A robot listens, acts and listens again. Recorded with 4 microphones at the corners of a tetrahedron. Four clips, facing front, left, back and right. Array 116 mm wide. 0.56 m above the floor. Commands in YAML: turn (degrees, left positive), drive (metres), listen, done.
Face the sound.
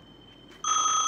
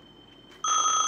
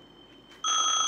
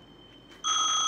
turn: 95
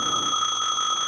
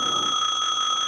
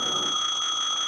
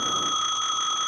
turn: 30
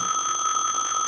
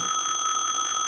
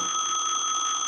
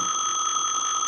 done: "Facing the phone ringing."